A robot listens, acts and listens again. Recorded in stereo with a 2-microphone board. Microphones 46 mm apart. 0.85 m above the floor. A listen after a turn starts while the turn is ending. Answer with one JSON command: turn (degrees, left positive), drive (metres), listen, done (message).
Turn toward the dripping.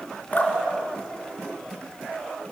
{"turn": 35}
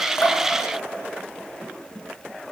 {"listen": true}
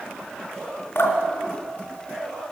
{"turn": 105}
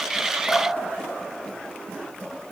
{"turn": 20}
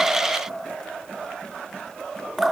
{"done": "Found it: dripping, straight ahead, 2 to 4 m away."}